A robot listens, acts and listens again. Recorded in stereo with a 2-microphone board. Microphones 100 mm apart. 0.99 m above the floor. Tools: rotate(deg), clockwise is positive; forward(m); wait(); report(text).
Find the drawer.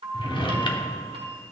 rotate(-55)
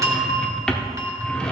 rotate(-10)
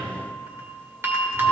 wait()
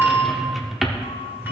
report("Found it: a drawer, straight ahead, under 1 m away.")